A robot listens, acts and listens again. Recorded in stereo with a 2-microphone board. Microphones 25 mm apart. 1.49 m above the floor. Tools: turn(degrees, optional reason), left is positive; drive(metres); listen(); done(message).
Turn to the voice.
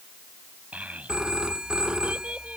turn(degrees=-70, reason="The child speaking: about 70° right or 110° right.")
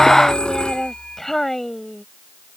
turn(degrees=15, reason="So it is at 15° left.")
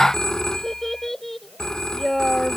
done("Found it: a child speaking, straight ahead.")